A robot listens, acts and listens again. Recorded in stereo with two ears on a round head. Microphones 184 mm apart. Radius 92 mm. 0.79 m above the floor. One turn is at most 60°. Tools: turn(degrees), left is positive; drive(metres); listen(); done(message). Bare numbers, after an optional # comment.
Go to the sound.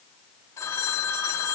# The phone ringing: about 20° left or 160° left.
turn(20)
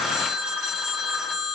drive(1.0)
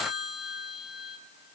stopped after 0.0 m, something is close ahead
done("Something is in my way. I am facing the phone ringing but have not reached it.")